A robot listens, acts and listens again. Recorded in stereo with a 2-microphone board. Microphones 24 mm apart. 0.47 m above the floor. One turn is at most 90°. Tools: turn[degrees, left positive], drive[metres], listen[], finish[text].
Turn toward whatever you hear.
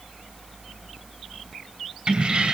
Thought: The keys jangling: about 50° right or 130° right.
Action: turn[-50]
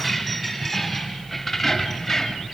Thought: So it is at 10° left.
Action: turn[10]
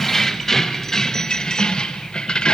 Thought: The keys jangling is now 40° left.
Action: turn[40]
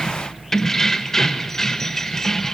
Thought: The keys jangling is now 20° left.
Action: turn[20]
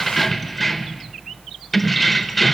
Action: finish[Facing the keys jangling.]